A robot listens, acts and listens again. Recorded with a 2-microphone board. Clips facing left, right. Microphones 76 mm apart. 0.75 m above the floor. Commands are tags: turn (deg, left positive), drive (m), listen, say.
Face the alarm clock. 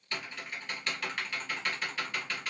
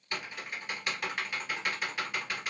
<listen/>
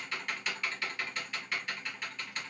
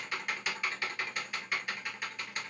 <listen/>
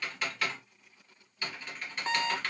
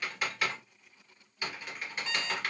<turn deg="45"/>
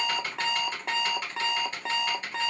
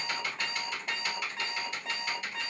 <turn deg="90"/>
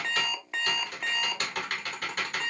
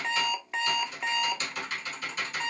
<say>Found it: an alarm clock, straight ahead, under 1 m away.</say>